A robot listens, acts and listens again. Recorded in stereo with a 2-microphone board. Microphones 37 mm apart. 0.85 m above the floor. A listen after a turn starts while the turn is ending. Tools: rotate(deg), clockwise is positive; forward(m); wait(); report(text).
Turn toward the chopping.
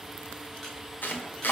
rotate(-65)
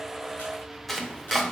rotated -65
report("Facing the chopping, 1 to 2 m away.")